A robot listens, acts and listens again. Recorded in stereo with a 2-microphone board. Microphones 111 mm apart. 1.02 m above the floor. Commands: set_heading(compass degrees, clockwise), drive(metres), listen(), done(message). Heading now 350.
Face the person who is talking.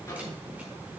listen()
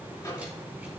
listen()
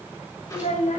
set_heading(275)
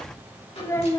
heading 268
set_heading(243)
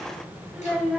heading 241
done("Facing the child speaking.")